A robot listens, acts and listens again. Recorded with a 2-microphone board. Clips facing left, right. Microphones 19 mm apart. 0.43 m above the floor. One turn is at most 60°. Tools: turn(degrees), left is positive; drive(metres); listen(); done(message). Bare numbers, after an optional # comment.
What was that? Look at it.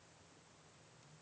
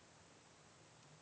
listen()
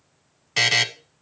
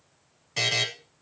# The buzzer: about 40° left or 140° left.
turn(40)
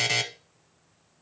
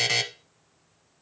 done("Found it: a buzzer, straight ahead.")